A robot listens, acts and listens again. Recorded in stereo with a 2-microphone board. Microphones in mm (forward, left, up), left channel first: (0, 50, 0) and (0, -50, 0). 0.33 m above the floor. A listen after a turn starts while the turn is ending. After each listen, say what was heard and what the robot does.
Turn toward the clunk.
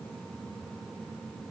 Keep listening.
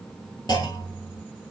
The clunk: about 45° left or 135° left. Turn 45° left.
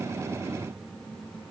Keep listening.
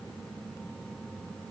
I heard a clunk, but can't make it out now. It was about straight ahead or 90° left.